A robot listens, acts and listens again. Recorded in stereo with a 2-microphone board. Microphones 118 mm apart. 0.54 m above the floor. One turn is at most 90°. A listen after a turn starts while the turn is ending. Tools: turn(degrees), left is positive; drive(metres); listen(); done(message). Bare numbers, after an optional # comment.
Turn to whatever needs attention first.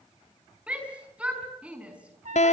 turn(-30)
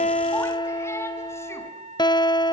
listen()
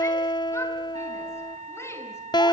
listen()
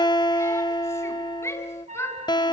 # So it is at 20° left.
turn(20)
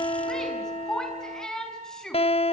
done("Facing the shout.")